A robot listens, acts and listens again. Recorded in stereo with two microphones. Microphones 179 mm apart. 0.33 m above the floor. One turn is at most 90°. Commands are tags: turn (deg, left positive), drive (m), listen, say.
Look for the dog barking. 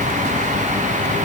<listen/>
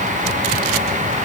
<listen/>
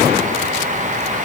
<say>I can't make out a dog barking to turn to.</say>